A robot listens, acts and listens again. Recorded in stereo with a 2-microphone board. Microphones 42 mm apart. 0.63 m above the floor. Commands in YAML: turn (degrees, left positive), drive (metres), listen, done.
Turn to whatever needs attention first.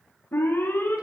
turn: 70
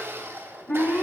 turn: 40
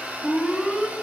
done: "Facing the alarm."